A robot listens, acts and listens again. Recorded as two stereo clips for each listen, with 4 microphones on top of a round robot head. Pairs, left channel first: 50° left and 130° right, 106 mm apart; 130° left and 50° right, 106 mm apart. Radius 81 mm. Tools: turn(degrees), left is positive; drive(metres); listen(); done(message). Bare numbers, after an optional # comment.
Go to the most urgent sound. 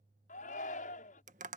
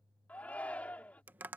# The shout: 50° left.
turn(50)
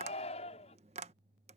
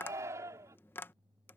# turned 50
# The shout is now 15° left.
turn(15)
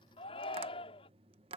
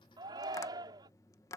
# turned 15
drive(1.0)
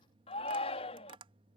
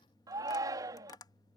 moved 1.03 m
# The shout is now 10° left.
turn(10)
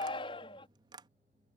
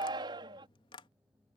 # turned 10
drive(1.0)
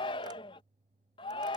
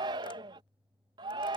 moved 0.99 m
drive(1.0)
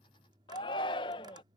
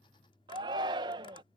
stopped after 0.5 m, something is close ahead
done("Arrived at the shout, straight ahead.")